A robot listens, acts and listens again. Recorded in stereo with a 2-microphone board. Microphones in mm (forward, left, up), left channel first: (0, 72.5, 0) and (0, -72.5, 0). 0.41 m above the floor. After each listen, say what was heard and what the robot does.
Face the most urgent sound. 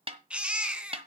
Turn 30° right.
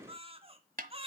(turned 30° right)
So it is at 145° right. Turn 145° right.
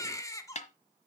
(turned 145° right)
The baby crying is now 20° left. Turn 20° left.
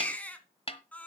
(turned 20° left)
The baby crying is now 10° left. Turn 10° left.
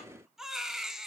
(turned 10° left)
Found it: a baby crying, straight ahead.